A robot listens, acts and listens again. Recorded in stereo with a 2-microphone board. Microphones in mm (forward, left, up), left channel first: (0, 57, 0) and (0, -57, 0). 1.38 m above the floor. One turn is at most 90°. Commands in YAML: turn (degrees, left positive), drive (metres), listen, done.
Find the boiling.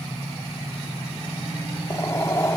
turn: 30
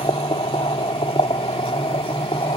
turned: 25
turn: 90
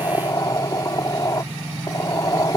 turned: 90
turn: 35
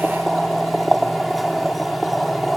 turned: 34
done: "Facing the boiling."